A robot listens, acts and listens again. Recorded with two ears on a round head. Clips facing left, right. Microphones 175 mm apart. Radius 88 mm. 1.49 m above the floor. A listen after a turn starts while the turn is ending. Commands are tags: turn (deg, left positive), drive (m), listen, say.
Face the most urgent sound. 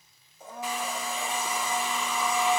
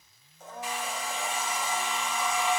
<listen/>
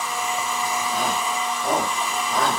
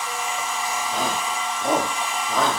<turn deg="-25"/>
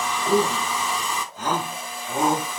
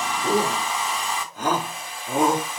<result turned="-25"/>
<turn deg="-130"/>
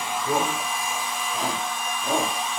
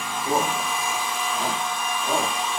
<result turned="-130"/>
<turn deg="10"/>
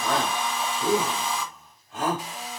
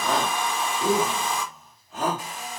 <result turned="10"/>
<say>Facing the shout.</say>